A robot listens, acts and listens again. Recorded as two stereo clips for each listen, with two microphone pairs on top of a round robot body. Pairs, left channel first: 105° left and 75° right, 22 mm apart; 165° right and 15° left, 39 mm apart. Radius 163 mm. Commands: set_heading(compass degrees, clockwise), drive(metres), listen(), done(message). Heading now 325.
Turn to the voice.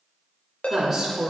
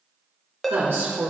done("Found it: a woman speaking, straight ahead.")